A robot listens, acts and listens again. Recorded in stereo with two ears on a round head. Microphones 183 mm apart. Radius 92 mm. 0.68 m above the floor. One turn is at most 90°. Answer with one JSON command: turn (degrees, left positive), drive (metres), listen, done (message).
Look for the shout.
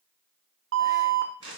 {"listen": true}
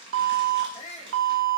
{"turn": 35}
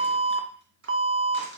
{"listen": true}
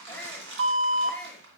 {"done": "Found it: a shout, straight ahead."}